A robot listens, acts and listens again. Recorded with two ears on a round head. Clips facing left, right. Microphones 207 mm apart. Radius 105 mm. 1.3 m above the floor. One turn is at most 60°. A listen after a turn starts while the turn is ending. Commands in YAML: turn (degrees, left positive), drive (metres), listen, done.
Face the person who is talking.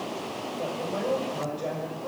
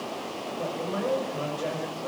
turn: -15
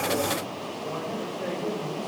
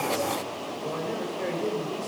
turn: -40
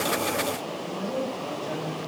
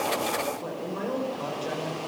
turn: -60
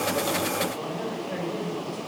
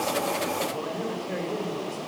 turn: -45
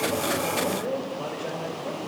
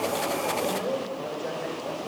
done: "Facing the man speaking, over 4 m away."